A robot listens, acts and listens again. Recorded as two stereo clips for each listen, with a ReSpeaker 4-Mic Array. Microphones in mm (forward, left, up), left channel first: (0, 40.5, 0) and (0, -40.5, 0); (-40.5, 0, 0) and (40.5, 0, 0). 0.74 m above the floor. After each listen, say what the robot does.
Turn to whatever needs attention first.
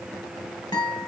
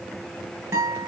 Keep listening.
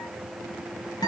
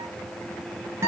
Keep listening.
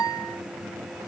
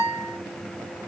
I can't make out anything urgent, only a guitar.